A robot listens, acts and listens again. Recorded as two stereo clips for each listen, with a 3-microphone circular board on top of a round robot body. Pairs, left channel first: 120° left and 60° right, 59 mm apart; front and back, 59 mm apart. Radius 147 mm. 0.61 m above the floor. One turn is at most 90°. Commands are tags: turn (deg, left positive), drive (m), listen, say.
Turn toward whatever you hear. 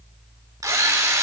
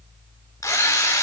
<turn deg="-40"/>
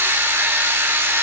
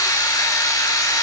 <turn deg="-15"/>
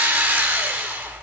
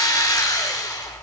<say>Found it: a drill, straight ahead, 2 to 4 m away.</say>